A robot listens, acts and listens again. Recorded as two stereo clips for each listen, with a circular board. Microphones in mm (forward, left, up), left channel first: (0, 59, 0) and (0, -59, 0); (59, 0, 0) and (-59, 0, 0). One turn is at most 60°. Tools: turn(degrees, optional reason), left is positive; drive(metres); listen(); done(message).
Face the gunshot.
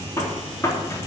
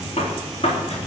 turn(degrees=25, reason="The gunshot: 25° left.")
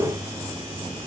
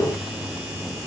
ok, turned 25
done("Facing where the gunshot came from. I can't hear it now.")